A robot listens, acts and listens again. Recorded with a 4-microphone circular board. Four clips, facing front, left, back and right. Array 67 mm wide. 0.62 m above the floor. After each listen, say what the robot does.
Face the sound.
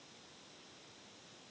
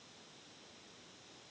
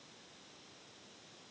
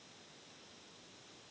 Keep listening.
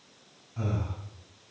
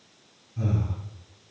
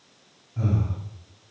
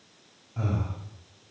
Turn 80° right.
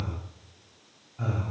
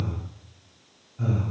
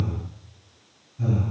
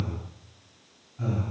Facing the breathing, 1 to 2 m away.